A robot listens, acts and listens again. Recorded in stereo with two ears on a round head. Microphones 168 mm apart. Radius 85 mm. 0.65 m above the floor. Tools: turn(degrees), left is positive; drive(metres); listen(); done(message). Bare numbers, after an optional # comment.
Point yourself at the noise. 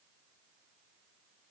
listen()
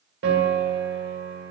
# The piano: about 70° right or 110° right.
turn(-70)
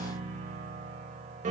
# So it is at 40° right.
turn(-40)
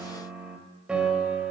done("Facing the piano, under 1 m away.")